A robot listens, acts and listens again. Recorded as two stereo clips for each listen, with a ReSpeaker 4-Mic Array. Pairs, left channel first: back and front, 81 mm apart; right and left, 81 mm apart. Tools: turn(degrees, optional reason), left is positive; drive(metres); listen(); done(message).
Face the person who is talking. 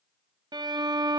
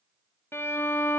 listen()
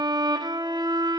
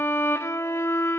listen()
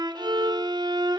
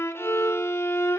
done("I can't make out anyone speaking, only a violin.")